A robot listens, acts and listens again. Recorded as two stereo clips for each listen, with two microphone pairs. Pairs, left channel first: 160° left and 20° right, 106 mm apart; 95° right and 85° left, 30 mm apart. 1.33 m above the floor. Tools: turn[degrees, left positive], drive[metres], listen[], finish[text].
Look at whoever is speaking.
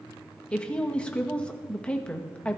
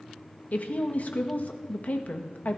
Thought: The woman speaking: 120° right.
Action: turn[-120]
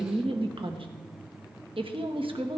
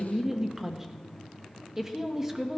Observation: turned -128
Thought: The woman speaking is now 10° left.
Action: turn[10]
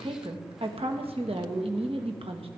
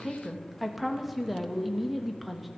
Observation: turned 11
Action: finish[Found it: a woman speaking, straight ahead.]